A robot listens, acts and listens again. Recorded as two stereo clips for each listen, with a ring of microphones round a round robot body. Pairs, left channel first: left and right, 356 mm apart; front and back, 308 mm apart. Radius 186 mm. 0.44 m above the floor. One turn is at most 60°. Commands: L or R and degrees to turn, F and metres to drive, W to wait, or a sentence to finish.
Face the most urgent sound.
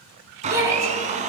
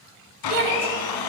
R60
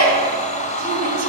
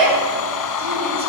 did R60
R60
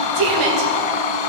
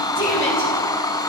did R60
R60
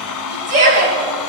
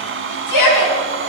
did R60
R25
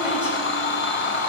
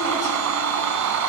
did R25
W
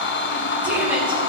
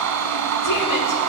W
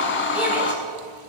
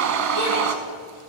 Facing where the shout came from. I can't hear it now.